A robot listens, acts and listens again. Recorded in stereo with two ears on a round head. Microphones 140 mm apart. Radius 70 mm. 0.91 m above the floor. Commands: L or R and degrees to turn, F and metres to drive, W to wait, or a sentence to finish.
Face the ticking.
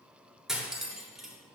W
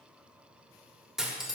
W
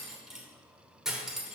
I can't make out ticking, only cutlery clinking.